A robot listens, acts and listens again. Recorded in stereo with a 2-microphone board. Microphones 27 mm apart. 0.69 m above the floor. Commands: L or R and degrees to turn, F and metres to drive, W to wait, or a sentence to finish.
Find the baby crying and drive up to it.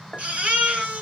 R65
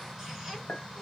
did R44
W
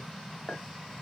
W
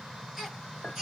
R20
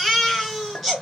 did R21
F1.0
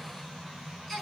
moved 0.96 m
F1.0
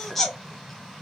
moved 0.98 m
L10
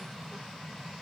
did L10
W
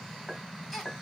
F1.0
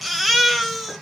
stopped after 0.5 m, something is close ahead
I am next to the baby crying.